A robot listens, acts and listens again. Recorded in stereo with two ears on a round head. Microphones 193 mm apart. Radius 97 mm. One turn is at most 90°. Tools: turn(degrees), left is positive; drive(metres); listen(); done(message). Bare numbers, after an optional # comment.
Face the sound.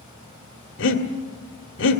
# The breathing: about 60° left or 120° left.
turn(60)
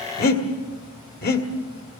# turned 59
# So it is at 50° left.
turn(50)
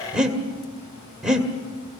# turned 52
done("Found it: breathing, straight ahead, 1 to 2 m away.")